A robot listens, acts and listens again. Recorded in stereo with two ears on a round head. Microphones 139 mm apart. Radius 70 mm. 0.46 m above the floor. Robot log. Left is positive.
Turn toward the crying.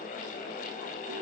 cmd idle
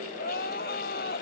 note: The crying: about 65° left or 115° left.
cmd yaw +65
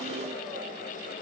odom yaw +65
cmd idle
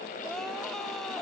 cmd idle
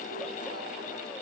end: I heard crying, but can't make it out now. It was about straight ahead or 50° left.